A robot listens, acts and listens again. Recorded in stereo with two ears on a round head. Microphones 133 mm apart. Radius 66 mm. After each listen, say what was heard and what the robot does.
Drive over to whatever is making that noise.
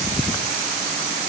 Keep listening.
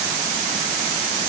Keep listening.
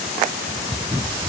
I can't make out anything to turn to.